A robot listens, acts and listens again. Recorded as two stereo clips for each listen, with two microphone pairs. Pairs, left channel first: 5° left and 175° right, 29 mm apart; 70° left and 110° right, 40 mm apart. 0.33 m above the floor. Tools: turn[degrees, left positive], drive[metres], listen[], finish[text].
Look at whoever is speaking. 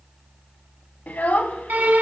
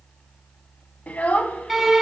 Thought: The child speaking: 25° left.
Action: turn[25]
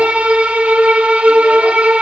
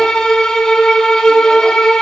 Action: listen[]
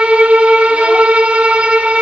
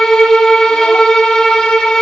Action: listen[]
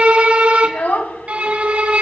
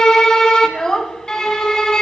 Action: finish[Facing the child speaking.]